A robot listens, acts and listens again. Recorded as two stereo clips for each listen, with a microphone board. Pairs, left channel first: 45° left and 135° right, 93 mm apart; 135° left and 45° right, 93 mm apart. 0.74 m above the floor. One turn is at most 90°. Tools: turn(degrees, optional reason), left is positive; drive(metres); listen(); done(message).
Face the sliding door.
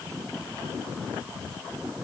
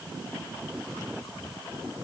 listen()
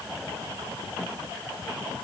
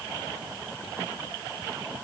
listen()
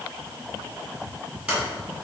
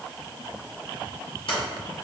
turn(degrees=90, reason="The sliding door: 150° left.")
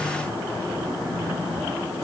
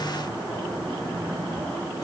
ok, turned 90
turn(degrees=60, reason="Nothing new. It was at 60° left.")
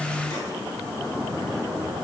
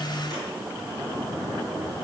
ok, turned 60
listen()
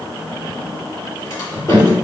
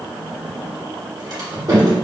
turn(degrees=-10, reason="The sliding door is now 10° right.")
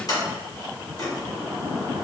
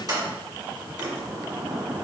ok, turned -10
done("Found it: a sliding door, straight ahead, 1 to 2 m away.")